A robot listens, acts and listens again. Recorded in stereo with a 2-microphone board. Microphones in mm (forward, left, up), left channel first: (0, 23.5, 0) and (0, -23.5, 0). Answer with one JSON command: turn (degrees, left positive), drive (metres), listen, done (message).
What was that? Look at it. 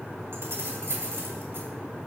{"turn": -55}
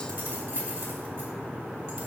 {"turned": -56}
{"turn": -65}
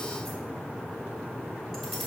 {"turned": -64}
{"done": "Found it: keys jangling, straight ahead, 2 to 4 m away."}